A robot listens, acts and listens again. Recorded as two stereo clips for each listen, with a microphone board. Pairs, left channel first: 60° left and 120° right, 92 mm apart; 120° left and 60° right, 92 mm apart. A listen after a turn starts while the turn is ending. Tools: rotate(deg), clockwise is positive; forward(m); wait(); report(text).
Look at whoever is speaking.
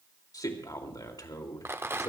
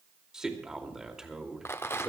rotate(-25)
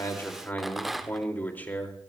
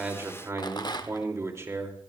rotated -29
report("Facing the man speaking.")